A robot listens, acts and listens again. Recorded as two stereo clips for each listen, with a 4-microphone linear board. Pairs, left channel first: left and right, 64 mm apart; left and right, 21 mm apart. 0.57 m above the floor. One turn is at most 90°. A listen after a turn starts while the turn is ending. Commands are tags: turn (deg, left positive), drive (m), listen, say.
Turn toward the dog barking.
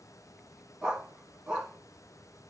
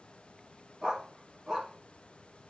<turn deg="-15"/>
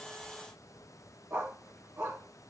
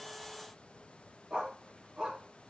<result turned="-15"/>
<turn deg="-90"/>
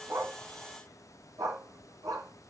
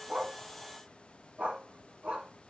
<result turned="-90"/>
<turn deg="-90"/>
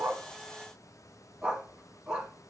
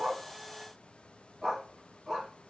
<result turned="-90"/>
<turn deg="-15"/>
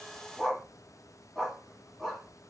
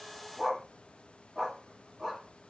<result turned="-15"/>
<say>Found it: a dog barking, straight ahead, 1 to 2 m away.</say>